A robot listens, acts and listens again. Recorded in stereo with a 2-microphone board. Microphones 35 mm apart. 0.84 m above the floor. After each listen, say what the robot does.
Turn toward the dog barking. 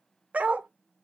Turn 50° right.
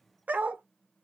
Turn 75° right.
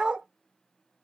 Turn 30° right.
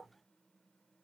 Keep listening.
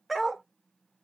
Facing the dog barking, under 1 m away.